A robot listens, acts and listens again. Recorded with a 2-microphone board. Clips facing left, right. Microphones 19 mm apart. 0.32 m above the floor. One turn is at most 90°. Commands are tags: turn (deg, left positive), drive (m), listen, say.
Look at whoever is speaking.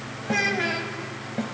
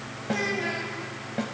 <turn deg="60"/>
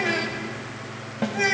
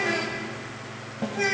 <turn deg="15"/>
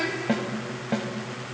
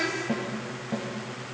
<say>Facing the child speaking, 1 to 2 m away.</say>